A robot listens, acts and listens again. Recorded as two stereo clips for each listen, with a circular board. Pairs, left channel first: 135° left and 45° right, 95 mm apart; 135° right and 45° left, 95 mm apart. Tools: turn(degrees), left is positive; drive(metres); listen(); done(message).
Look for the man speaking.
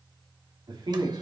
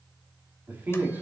turn(degrees=-20)
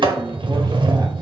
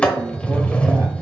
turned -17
listen()
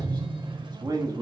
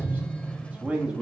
turn(degrees=-35)
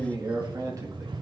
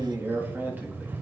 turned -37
turn(degrees=-20)
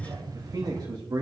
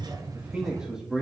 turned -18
turn(degrees=-40)
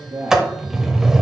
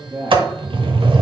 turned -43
done("Facing the man speaking.")